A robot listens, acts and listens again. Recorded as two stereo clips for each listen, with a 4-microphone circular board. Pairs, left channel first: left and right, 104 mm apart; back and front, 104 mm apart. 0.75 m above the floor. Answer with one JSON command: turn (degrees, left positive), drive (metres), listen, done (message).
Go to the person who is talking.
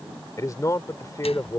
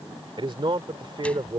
{"turn": 35}
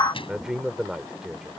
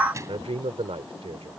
{"drive": 1.0}
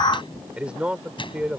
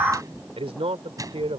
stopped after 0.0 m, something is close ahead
{"turn": -10}
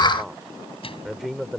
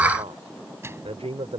{"done": "Something is in my way. I am facing the man speaking but have not reached it."}